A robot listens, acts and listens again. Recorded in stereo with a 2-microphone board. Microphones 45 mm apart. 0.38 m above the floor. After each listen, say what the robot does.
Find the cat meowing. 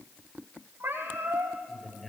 Turn 50° right.
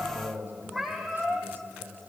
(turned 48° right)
Facing the cat meowing, over 4 m away.